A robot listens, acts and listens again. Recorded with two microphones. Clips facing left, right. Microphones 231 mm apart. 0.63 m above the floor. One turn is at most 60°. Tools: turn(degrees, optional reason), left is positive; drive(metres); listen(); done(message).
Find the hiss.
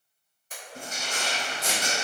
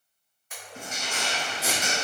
turn(degrees=-30)
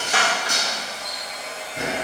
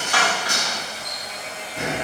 turn(degrees=25, reason="So it is at 25° left.")
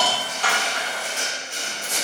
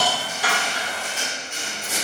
turn(degrees=-10, reason="The hiss is now 10° right.")
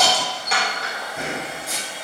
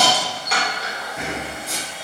done("Facing the hiss, under 1 m away.")